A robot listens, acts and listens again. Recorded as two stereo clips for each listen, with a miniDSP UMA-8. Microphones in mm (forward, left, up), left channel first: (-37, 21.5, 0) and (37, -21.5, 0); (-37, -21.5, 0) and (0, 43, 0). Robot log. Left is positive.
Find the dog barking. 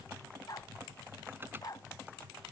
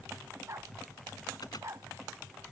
note: The dog barking: 105° left.
cmd yaw +105
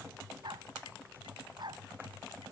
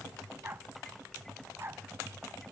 end: Facing the dog barking.